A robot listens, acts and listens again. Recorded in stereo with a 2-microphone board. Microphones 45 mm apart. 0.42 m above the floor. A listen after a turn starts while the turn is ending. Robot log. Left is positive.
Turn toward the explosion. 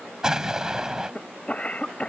cmd yaw -30
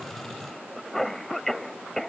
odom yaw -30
cmd idle
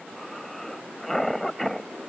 end: I heard an explosion, but can't make it out now. It was about 15° left or 135° right.